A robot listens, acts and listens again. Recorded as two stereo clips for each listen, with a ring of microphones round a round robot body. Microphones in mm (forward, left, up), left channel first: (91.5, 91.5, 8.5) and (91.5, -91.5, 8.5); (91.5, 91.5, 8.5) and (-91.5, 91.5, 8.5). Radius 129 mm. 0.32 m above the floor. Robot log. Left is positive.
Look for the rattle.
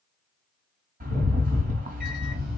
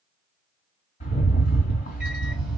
note: The rattle: 60° right.
cmd yaw -60
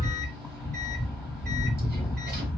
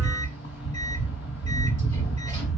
end: Found it: a rattle, straight ahead, 1 to 2 m away.